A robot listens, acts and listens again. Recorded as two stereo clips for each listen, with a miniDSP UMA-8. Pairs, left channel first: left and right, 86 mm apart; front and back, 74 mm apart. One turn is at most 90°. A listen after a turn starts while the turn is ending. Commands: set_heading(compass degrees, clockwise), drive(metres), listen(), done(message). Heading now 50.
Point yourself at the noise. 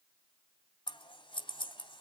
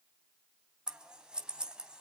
set_heading(320)
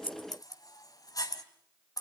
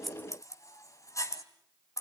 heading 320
set_heading(275)
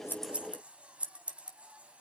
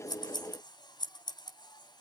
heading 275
set_heading(290)
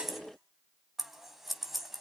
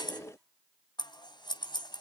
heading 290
done("Facing the scissors.")